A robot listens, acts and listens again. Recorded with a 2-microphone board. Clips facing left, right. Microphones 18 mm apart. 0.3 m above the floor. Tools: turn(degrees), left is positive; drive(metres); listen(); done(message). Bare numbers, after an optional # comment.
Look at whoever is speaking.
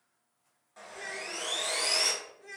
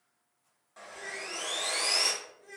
# The child speaking: about 40° left or 140° left.
turn(40)
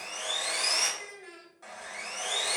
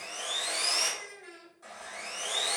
done("Facing the child speaking, under 1 m away.")